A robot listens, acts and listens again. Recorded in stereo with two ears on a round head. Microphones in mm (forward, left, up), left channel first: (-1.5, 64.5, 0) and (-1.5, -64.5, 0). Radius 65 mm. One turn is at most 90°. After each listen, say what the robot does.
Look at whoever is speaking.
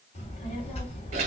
Turn 45° left.
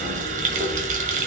Turn 90° left.
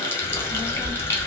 Facing the child speaking, 1 to 2 m away.